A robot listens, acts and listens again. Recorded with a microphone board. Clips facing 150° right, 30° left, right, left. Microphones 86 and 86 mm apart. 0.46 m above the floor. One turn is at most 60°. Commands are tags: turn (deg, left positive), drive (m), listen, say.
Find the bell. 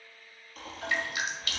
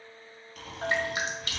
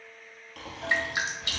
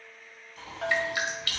<turn deg="60"/>
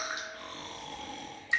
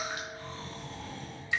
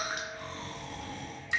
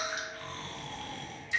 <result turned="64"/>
<turn deg="15"/>
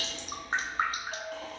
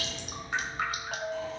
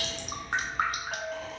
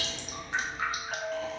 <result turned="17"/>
<say>Facing the bell, under 1 m away.</say>